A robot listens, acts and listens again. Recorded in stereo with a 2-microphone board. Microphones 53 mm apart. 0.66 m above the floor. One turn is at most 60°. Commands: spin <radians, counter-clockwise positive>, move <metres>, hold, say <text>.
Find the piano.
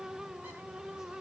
hold
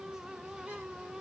hold
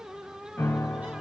spin 1.05
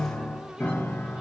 spin 0.79
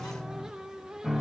say Facing the piano.